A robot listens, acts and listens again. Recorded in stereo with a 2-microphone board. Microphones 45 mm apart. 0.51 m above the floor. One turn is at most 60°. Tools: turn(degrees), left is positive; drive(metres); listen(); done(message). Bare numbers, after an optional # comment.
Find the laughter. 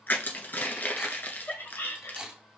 # The laughter: about 70° left or 110° left.
turn(60)
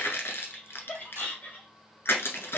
# So it is at 50° left.
turn(50)
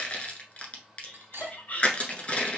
# The laughter is now 45° left.
turn(45)
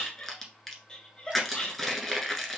# The laughter is now 20° left.
turn(20)
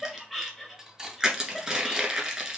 done("Found it: laughter, straight ahead.")